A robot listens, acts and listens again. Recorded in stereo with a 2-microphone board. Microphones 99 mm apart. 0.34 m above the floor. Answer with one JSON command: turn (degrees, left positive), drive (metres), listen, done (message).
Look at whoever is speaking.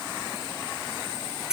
{"listen": true}
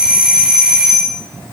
{"listen": true}
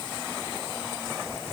{"done": "I can't make out anyone speaking to turn to."}